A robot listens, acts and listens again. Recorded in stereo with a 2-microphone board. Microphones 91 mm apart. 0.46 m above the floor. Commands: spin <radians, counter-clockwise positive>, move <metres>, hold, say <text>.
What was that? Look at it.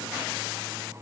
hold
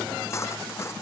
spin 0.52
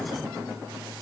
hold
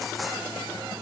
hold
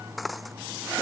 say Facing the cutlery clinking.